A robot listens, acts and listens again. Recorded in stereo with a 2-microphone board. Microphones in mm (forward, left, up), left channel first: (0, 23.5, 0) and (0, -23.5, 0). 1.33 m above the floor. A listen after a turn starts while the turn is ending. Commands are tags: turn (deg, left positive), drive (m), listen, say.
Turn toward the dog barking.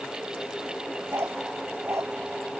<turn deg="-90"/>
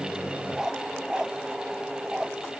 <turn deg="-20"/>
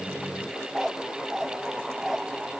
<say>Facing the dog barking.</say>